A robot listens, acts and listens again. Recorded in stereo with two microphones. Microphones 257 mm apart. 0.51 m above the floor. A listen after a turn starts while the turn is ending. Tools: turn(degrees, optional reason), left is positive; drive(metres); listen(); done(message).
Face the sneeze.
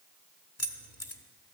listen()
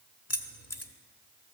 listen()
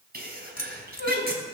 turn(degrees=-40, reason="The sneeze: about 40° right or 140° right.")
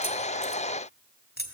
listen()
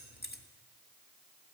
done("I heard a sneeze, but can't make it out now. It was about straight ahead or 100° right.")